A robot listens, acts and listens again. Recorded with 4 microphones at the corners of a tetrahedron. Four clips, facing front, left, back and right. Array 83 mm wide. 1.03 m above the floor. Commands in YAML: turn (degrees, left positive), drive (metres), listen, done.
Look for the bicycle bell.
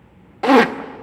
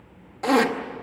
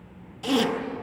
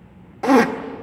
listen: true
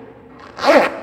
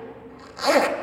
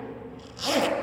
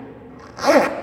listen: true
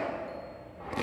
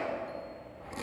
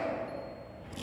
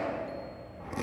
done: "I can't make out a bicycle bell to turn to."